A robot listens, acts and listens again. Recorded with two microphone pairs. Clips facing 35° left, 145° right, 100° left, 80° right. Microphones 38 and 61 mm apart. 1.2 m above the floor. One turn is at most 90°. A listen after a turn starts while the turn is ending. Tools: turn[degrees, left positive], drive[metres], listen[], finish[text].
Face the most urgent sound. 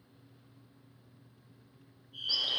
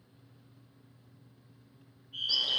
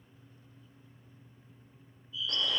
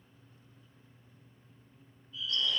Thought: The fire alarm: 120° right.
Action: turn[-90]
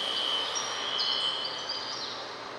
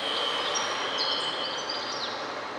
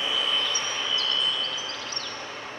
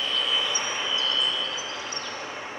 Thought: Nothing new. It was at 30° right.
Action: turn[-30]
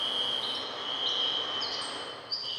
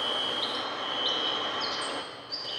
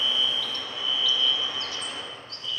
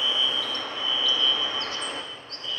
Action: finish[Facing the fire alarm.]